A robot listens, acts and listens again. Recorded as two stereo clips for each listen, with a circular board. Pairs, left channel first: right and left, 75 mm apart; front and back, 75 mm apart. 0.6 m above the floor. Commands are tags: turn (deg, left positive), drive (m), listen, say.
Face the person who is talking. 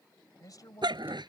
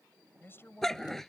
<turn deg="-55"/>
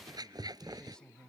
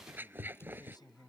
<turn deg="-10"/>
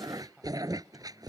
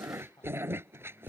<say>Facing the man speaking.</say>